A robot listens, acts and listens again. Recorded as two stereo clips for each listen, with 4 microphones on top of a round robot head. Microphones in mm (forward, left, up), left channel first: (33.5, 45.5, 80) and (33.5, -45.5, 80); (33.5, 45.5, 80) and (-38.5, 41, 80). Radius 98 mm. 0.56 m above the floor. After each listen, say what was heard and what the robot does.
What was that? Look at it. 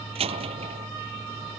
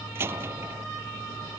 The door slam: 110° right. Turn 110° right.
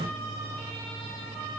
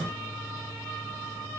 I heard a door slam from this way, but can't make it out now.